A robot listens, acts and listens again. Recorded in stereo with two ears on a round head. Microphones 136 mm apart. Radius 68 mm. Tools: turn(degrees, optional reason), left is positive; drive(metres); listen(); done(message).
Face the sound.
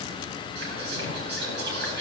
turn(degrees=-90)
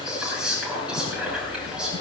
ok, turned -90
done("Facing the whispering, over 4 m away.")